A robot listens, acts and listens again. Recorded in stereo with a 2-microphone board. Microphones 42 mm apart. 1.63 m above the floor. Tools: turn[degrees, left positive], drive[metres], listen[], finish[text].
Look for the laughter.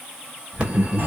Thought: The laughter: about 35° left or 145° left.
Action: turn[35]
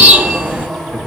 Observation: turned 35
Thought: So it is at 120° left.
Action: turn[120]
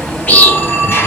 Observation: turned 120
Action: listen[]
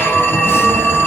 Action: listen[]
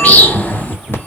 Thought: The laughter is now 45° left.
Action: turn[45]
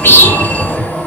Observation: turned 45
Action: finish[Found it: laughter, straight ahead.]